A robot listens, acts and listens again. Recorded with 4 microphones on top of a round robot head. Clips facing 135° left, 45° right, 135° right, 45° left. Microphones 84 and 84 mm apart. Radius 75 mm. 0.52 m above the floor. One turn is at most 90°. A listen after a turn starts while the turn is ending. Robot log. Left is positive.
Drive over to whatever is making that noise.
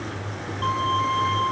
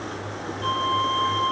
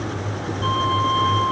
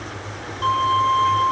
note: The violin: 95° left.
cmd yaw +90
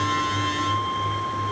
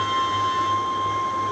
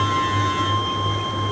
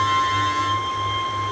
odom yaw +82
note: The violin is now 15° left.
cmd yaw +15
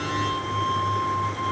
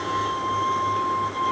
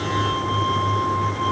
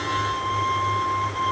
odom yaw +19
cmd fwd 1.0
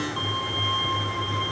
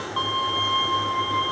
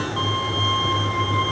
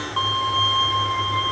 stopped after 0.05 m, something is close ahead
end: Blocked. The violin is further on, straight ahead.